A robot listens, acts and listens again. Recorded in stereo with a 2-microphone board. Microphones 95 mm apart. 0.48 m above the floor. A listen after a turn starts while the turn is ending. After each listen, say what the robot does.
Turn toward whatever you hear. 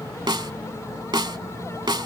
Turn 50° right.
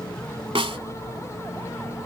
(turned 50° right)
Turn 75° right.
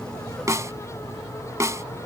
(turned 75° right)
Turn 35° right.
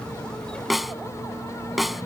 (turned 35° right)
Facing the snare drum.